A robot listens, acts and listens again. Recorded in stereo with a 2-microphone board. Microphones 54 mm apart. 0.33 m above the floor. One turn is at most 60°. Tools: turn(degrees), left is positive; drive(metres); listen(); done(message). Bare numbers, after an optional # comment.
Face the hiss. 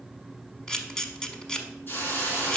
# The hiss: about 45° left or 135° left.
turn(45)
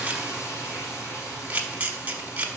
# So it is at 90° left.
turn(60)
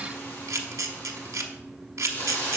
# The hiss is now 50° left.
turn(50)
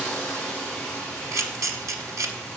# The hiss is now 15° left.
turn(15)
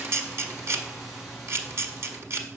listen()
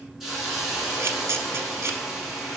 done("Facing the hiss, 2 to 4 m away.")